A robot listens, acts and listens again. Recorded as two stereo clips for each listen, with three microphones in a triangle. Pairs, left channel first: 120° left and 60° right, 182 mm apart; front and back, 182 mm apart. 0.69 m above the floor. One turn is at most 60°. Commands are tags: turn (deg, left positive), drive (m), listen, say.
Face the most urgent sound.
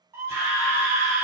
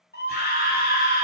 <turn deg="10"/>
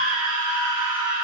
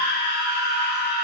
<say>Facing the scream, 1 to 2 m away.</say>